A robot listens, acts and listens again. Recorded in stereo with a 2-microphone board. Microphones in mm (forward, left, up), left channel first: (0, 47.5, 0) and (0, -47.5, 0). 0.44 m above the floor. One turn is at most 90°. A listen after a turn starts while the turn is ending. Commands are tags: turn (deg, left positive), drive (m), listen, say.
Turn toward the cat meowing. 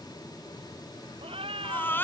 <turn deg="-70"/>
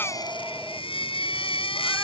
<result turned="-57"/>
<listen/>
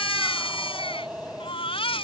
<turn deg="-10"/>
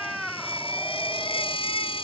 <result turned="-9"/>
<say>Found it: a cat meowing, straight ahead.</say>